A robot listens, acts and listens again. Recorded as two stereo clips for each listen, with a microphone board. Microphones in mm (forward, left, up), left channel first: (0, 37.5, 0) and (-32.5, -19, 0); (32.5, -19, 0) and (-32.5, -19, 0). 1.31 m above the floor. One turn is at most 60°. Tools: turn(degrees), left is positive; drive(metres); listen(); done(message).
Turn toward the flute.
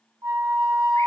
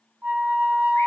turn(degrees=-60)
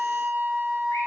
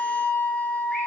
turn(degrees=-60)
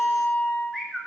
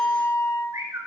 done("Found it: a flute, straight ahead.")